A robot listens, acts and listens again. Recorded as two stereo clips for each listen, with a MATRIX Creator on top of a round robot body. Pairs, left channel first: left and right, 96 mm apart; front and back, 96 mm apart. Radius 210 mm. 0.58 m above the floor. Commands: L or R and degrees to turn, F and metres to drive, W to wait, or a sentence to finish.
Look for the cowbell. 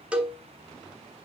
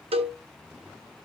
R170
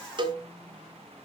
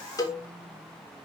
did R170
R55
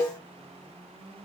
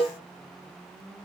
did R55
L20
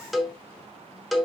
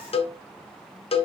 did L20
Found it: a cowbell, straight ahead.